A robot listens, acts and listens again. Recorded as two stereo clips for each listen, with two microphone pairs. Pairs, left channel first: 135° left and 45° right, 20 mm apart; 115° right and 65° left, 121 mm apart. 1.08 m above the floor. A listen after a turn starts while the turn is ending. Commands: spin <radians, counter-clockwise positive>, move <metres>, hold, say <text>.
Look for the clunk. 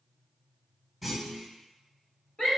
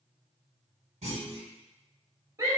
spin 0.96
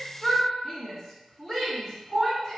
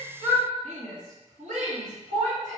say I heard a clunk from this way, but can't make it out now.